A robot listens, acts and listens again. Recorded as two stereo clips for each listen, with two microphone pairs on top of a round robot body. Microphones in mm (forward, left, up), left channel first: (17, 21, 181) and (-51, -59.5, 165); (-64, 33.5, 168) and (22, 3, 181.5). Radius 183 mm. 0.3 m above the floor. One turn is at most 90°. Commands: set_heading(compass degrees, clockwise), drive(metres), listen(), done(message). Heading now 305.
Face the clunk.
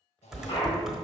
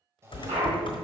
done("Facing the clunk, 2 to 4 m away.")